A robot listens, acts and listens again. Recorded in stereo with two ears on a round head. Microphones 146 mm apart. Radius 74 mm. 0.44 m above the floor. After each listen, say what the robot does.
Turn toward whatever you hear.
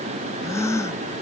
Turn 20° left.
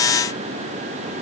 Keep listening.
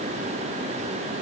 I heard a gasp, but can't make it out now. It was about straight ahead or 140° left.